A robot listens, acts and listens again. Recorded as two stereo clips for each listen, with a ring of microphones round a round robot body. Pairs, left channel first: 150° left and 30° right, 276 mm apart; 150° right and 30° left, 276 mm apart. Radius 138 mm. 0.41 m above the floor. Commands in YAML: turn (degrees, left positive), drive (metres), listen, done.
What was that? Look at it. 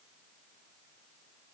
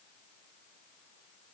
listen: true
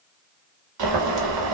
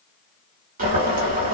turn: -35
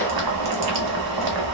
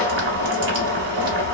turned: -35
turn: -15
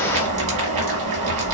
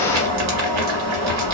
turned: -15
done: "Facing the boiling."